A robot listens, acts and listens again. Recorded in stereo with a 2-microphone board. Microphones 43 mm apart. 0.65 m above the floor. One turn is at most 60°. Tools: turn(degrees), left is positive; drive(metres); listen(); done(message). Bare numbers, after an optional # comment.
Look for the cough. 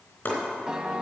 listen()
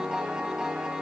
listen()
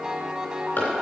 done("I can't make out a cough, only chopping and a piano.")